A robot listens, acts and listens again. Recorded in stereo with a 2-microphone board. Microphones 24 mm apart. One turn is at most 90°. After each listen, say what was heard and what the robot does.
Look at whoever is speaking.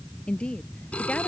The woman speaking: about 50° left or 130° left. Turn 50° left.
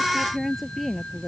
Found it: a woman speaking, straight ahead.